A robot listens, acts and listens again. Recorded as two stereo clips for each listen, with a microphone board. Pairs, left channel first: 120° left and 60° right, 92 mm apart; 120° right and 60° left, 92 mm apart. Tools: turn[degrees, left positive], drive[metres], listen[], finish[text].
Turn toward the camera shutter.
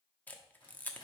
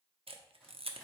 Thought: The camera shutter: 45° left.
Action: turn[45]
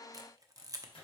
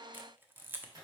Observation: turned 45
Thought: The camera shutter is now 10° right.
Action: turn[-10]
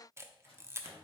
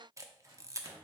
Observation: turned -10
Action: finish[Facing the camera shutter.]